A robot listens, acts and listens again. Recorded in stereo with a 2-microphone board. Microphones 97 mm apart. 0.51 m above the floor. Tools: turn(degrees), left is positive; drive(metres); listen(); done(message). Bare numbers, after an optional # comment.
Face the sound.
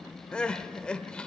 turn(30)
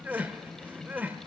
# So it is at 20° right.
turn(-20)
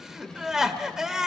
done("Found it: crying, straight ahead, 1 to 2 m away.")